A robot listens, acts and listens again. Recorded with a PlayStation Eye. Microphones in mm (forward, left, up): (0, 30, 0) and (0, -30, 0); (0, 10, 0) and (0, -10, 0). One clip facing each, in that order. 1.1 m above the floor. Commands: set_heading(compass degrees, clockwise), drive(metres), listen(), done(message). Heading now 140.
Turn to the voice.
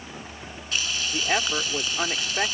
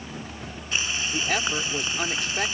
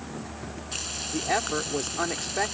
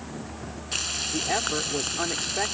set_heading(110)
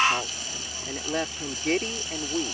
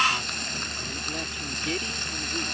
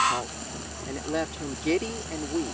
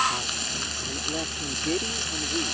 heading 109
set_heading(334)
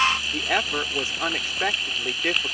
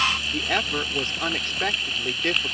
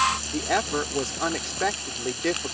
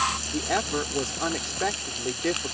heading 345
set_heading(335)
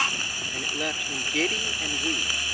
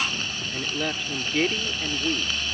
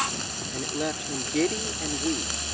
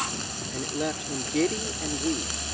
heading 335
done("Facing the woman speaking.")